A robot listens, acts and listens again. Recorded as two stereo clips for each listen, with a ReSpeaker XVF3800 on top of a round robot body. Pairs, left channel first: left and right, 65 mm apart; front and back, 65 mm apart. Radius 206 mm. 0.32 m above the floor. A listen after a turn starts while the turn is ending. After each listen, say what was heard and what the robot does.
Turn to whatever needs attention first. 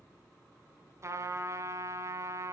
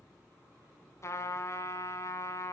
Keep listening.
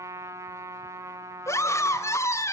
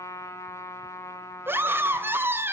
The scream: 130° left. Turn 130° left.
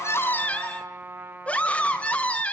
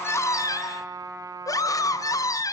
The scream is now 20° left. Turn 20° left.
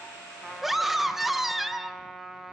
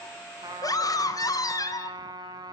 Facing the scream, 2 to 4 m away.